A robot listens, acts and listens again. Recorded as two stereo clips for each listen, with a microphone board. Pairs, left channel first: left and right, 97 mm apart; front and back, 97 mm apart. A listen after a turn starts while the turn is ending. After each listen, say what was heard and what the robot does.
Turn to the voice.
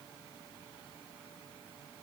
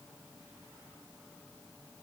Keep listening.
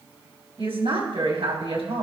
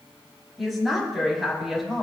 The woman speaking: 90° right. Turn 90° right.
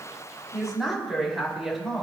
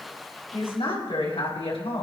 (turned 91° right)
Facing the woman speaking, over 4 m away.